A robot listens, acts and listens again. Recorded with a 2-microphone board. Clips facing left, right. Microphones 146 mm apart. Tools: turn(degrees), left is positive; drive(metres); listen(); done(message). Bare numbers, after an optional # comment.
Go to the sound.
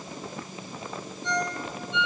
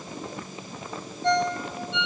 # The ringtone: about 65° right or 115° right.
turn(-65)
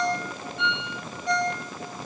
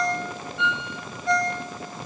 drive(1.0)
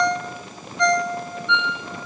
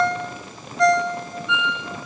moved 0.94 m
drive(1.0)
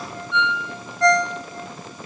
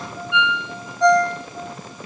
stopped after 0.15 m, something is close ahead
# The ringtone is now 15° right.
turn(-15)
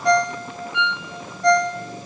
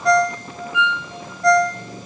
done("I am next to the ringtone.")